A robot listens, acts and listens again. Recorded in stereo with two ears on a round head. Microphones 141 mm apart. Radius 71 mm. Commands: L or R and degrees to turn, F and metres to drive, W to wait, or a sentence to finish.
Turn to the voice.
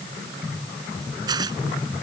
W
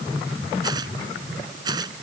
W
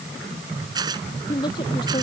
L30
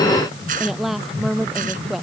Found it: a woman speaking, straight ahead.